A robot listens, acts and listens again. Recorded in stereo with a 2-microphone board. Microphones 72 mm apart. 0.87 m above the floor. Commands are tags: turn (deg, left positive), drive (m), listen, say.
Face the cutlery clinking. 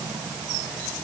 <listen/>
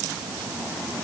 <listen/>
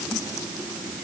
<say>I can't make out cutlery clinking.</say>